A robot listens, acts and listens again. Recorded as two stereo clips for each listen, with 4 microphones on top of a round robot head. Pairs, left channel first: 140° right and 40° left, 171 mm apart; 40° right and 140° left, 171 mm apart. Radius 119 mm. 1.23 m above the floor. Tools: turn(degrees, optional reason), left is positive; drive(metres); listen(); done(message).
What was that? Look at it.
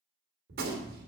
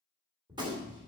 turn(degrees=70, reason="The gunshot: 70° left.")
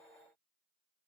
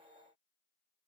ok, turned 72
done("I heard a gunshot from this way, but can't make it out now.")